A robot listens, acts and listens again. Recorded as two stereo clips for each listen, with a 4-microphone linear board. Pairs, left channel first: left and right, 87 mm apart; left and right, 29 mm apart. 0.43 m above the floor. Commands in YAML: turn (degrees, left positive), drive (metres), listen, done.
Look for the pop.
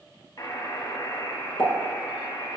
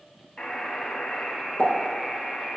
turn: 90
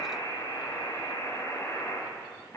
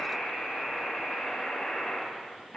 done: "I heard a pop from this way, but can't make it out now."